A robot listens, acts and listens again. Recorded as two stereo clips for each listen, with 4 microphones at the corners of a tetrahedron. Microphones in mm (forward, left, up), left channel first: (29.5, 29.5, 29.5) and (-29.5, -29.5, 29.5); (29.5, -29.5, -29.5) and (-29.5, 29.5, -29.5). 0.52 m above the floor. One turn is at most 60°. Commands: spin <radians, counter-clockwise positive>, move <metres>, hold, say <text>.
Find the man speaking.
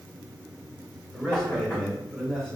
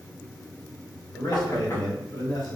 spin -0.70
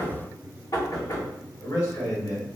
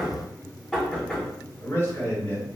say Found it: a man speaking, straight ahead, 1 to 2 m away.